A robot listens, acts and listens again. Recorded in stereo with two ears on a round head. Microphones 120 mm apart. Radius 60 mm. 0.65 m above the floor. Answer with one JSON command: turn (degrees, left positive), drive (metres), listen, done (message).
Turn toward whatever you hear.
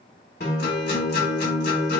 {"turn": 90}
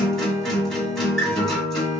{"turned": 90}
{"done": "Facing the guitar, 2 to 4 m away."}